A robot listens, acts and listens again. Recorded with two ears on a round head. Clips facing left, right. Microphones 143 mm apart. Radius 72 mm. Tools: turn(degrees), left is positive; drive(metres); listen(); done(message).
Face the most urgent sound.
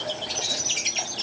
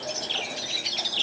listen()
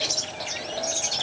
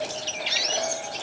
listen()
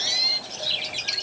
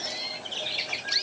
done("I can't make out anything urgent to turn to.")